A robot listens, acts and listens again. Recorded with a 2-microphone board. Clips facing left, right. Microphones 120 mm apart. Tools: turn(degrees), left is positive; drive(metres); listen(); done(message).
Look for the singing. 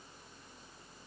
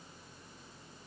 listen()
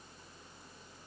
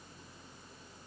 listen()
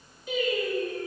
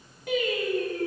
turn(degrees=-90)
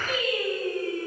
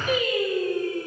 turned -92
turn(degrees=-20)
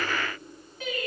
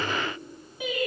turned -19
turn(degrees=-15)
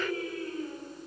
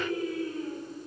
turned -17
turn(degrees=-10)
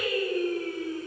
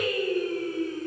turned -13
done("Facing the singing, 2 to 4 m away.")